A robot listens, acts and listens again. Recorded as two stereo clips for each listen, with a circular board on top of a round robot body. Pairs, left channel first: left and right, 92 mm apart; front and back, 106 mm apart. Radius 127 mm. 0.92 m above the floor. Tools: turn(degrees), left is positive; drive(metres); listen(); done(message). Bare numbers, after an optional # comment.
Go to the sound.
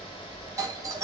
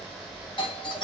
# The doorbell: 40° right.
turn(-40)
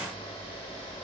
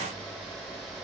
listen()
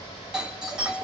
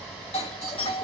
drive(1.0)
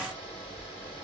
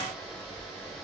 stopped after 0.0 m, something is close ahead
listen()
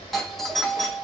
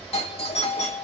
done("Blocked. The doorbell is further on, straight ahead.")